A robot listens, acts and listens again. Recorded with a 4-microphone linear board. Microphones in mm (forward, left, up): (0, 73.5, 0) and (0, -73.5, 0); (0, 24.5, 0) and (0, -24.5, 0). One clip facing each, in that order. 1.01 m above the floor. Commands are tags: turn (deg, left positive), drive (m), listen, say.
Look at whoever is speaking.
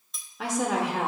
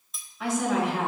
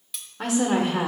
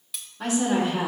<turn deg="70"/>
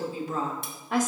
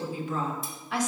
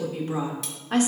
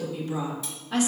<turn deg="45"/>
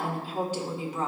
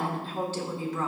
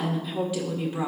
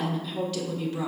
<turn deg="20"/>
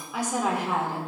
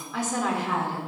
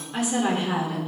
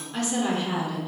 <turn deg="20"/>
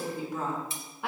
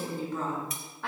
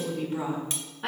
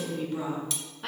<turn deg="15"/>
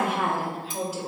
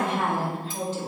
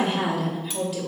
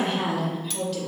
<turn deg="10"/>
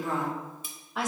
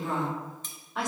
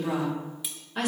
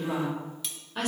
<say>Facing the woman speaking, 2 to 4 m away.</say>